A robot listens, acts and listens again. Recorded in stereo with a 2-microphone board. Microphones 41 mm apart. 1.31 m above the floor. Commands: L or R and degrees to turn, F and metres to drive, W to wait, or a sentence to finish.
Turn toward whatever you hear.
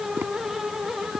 R70
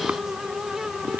R45
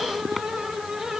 Facing the tapping.